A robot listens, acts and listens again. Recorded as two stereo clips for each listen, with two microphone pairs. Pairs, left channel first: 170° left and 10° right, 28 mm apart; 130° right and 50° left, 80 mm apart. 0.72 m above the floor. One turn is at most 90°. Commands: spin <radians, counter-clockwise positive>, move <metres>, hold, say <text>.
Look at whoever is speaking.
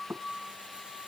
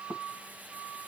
hold
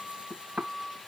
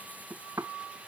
hold
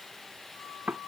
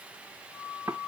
say I can't make out anyone speaking to turn to.